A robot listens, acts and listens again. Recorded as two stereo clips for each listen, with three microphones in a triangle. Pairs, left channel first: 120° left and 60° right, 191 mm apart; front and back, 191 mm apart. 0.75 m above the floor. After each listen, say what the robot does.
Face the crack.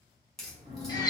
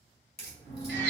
Turn 30° left.
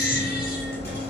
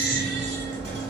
I heard a crack from this way, but can't make it out now.